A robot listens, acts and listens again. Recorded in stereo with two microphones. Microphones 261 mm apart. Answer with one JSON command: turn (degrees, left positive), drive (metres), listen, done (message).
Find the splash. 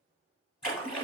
{"turn": 90}
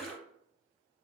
{"done": "Found it: a splash, straight ahead, 1 to 2 m away."}